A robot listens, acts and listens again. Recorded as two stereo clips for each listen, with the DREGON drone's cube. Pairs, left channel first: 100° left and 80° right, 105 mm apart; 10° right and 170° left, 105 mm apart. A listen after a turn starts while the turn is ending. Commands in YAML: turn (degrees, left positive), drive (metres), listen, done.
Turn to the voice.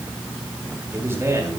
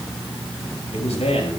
turn: -15
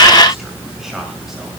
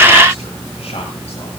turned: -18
listen: true
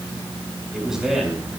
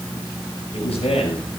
done: "Found it: a man speaking, straight ahead, over 4 m away."